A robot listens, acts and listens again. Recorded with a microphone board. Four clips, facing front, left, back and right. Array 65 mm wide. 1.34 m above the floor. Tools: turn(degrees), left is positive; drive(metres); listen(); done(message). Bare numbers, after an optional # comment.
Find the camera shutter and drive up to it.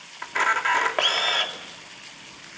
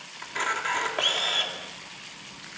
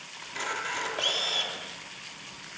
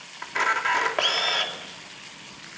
# The camera shutter: 15° right.
turn(-15)
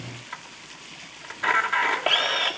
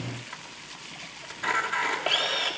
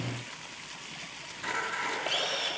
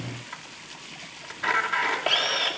drive(1.0)
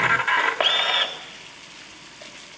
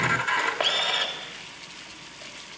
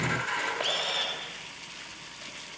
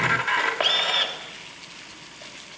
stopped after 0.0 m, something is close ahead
done("Blocked. The camera shutter is further on, straight ahead.")